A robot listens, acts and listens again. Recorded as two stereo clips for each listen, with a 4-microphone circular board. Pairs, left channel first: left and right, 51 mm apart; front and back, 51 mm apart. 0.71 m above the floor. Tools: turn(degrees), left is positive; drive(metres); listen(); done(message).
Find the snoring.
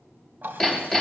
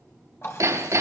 listen()
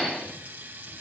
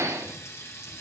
listen()
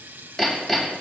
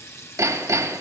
done("I can't make out snoring to turn to.")